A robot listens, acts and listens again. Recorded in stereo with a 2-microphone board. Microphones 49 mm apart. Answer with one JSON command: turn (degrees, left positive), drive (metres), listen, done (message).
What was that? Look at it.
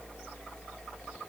{"listen": true}
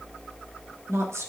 {"turn": -70}
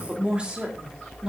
{"turn": -15}
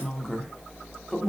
{"done": "Facing the woman speaking."}